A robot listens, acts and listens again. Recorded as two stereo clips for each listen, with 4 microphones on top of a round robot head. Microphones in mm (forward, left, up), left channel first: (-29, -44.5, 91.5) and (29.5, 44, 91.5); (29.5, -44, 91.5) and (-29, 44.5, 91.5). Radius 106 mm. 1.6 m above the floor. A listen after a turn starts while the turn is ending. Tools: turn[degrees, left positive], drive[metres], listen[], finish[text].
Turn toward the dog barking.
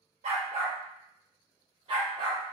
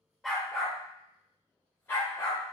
Action: finish[Facing the dog barking, 1 to 2 m away.]